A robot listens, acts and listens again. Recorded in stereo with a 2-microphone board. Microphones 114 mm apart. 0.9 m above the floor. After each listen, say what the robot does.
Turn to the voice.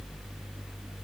Keep listening.
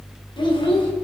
Turn 50° left.
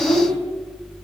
Facing the child speaking.